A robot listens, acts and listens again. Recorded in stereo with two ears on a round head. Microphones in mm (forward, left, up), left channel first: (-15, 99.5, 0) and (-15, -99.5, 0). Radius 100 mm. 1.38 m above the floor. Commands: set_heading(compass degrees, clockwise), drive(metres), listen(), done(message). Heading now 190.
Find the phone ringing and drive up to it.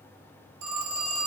set_heading(265)
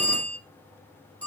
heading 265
drive(1.0)
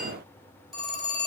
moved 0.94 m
drive(1.0)
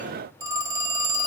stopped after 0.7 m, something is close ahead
set_heading(280)
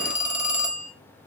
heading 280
done("Arrived at the phone ringing, straight ahead.")